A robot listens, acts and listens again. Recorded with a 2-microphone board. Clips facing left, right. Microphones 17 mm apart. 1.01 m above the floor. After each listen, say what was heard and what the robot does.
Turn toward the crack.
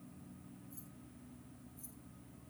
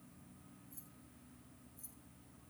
Keep listening.
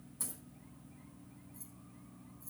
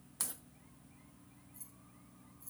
The crack: about 60° right or 120° right. Turn 60° right.
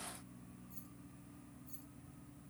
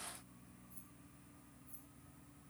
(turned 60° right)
Keep listening.
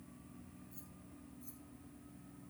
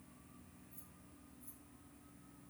I heard a crack, but can't make it out now. It was about straight ahead or 60° right.